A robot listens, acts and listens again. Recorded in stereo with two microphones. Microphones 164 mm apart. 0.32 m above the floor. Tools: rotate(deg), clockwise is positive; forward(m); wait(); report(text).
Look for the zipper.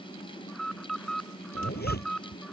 rotate(-90)
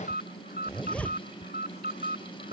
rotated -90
rotate(-10)
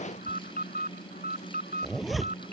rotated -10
report("Found it: a zipper, straight ahead.")